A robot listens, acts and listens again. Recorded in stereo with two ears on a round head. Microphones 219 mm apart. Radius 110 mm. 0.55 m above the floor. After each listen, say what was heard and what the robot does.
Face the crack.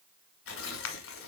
Turn 90° left.
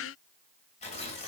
Facing where the crack came from. I can't hear it now.